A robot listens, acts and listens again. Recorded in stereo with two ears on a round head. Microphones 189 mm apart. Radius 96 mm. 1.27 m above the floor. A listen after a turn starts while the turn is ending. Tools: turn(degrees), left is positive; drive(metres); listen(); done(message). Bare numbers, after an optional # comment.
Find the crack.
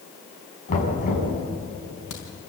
# The crack: about 75° left or 105° left.
turn(75)
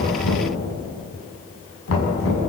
listen()
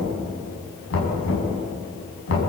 done("I heard a crack, but can't make it out now. It was about straight ahead or 30° left.")